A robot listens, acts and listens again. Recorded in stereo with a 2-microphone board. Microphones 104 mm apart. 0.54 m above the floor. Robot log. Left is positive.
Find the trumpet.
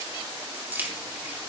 cmd idle
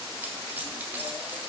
cmd idle
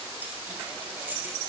end: I can't make out a trumpet, only keys jangling.